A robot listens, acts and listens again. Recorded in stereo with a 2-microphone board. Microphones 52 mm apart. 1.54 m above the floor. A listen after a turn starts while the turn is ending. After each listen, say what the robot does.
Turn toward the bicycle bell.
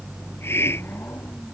Keep listening.
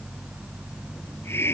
Keep listening.
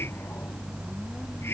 I can't make out a bicycle bell to turn to.